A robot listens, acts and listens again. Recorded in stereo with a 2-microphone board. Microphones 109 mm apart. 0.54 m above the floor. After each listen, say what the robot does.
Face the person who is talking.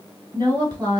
Turn 45° right.
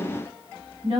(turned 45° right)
Turn 90° right.
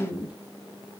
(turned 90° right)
Turn 15° right.
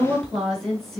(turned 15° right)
Facing the woman speaking.